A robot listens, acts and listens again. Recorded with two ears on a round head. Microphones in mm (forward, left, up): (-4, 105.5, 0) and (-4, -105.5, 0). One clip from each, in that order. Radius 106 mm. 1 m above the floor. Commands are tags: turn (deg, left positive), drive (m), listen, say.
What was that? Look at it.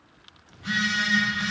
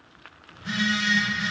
<turn deg="25"/>
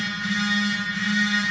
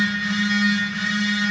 <say>Found it: a phone buzzing, straight ahead.</say>